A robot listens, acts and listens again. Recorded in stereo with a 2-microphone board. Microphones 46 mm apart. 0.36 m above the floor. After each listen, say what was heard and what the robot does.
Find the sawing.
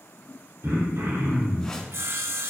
The sawing: about 60° right or 120° right. Turn 60° right.
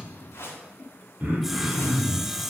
Facing the sawing.